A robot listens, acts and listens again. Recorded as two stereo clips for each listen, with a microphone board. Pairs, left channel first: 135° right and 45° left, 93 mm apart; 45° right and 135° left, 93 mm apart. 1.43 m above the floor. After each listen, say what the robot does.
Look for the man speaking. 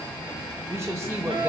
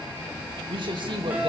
Turn 105° left.
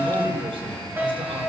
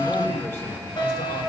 Keep listening.
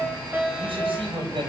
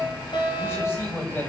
Turn 20° left.
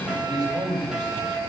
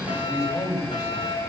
Facing the man speaking.